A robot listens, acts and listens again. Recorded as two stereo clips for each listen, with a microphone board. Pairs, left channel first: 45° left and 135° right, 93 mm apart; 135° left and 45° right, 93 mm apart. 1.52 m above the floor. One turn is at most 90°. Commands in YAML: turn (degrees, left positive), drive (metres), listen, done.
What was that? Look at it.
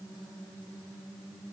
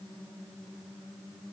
listen: true
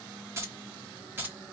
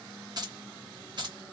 turn: -70
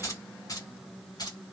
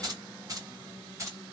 turn: 10
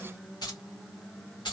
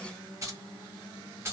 turn: 20
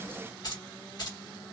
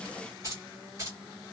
turn: 10
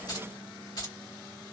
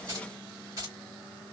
done: "Found it: keys jangling, straight ahead."